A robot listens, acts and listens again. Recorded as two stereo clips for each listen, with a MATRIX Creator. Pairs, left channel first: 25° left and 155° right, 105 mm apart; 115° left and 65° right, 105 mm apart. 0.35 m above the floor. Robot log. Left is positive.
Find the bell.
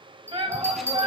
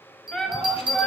note: The bell: 95° right.
cmd yaw -95
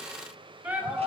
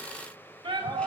cmd idle
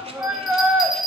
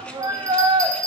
note: The bell is now 15° right.
cmd yaw -15
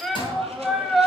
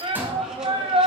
cmd idle
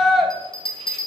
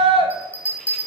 end: Found it: a bell, straight ahead, 1 to 2 m away.